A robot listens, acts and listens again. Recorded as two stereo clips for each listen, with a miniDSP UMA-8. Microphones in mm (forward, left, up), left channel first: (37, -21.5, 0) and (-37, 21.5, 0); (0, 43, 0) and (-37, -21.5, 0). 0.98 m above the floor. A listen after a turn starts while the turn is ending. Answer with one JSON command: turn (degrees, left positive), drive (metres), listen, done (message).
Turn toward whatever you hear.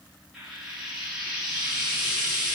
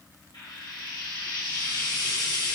{"turn": 70}
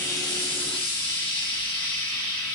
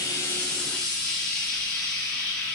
{"turn": -20}
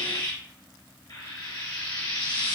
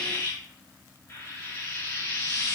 {"done": "Found it: frying, straight ahead, 1 to 2 m away."}